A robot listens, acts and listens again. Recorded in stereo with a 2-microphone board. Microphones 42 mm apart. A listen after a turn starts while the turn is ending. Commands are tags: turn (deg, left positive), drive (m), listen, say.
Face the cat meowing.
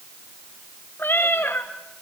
<turn deg="60"/>
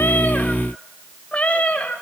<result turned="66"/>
<turn deg="35"/>
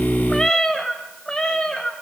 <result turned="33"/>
<turn deg="20"/>
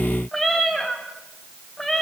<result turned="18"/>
<turn deg="10"/>
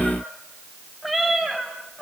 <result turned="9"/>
<say>Found it: a cat meowing, straight ahead, 2 to 4 m away.</say>